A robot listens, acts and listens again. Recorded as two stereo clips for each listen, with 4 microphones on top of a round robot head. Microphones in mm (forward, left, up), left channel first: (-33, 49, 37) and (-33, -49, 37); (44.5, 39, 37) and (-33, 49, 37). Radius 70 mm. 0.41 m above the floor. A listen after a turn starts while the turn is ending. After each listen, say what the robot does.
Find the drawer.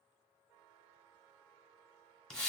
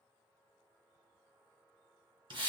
Keep listening.
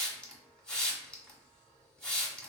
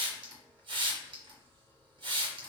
Keep listening.
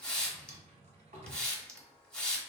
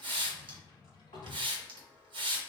Turn 55° right.
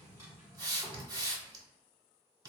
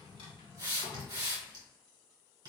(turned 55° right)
Turn 10° right.
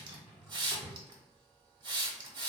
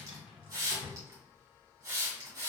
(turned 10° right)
Facing the drawer, 1 to 2 m away.